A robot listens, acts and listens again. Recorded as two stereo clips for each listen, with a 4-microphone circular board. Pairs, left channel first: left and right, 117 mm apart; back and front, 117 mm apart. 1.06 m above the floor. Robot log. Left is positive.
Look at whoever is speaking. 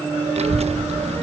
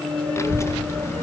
note: The child speaking: 115° right.
cmd yaw -115
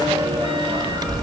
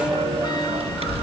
note: The child speaking is now 35° right.
cmd yaw -35
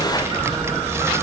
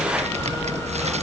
note: The child speaking is now 20° right.
cmd yaw -20
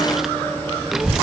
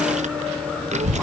end: Found it: a child speaking, straight ahead.